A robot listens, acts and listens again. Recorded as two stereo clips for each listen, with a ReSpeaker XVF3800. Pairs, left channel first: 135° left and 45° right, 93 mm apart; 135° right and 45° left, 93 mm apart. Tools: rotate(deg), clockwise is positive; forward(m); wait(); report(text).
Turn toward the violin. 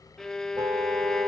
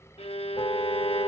rotate(140)
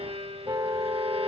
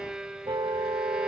rotate(40)
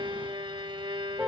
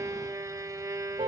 rotate(10)
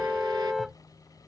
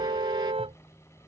wait()
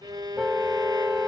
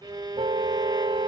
report("Facing the violin.")